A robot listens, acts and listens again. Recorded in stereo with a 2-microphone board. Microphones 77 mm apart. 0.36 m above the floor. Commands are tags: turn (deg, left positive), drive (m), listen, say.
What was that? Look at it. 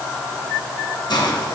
<turn deg="70"/>
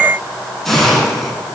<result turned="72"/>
<say>Facing the hiss, 2 to 4 m away.</say>